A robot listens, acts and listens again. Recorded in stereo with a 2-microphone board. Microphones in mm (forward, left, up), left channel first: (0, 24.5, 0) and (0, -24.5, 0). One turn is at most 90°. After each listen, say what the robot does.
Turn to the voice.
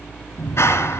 Keep listening.
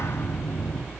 Keep listening.
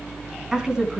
Turn 30° right.
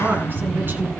Turn 90° right.
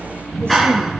Turn 45° right.
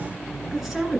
Facing the woman speaking.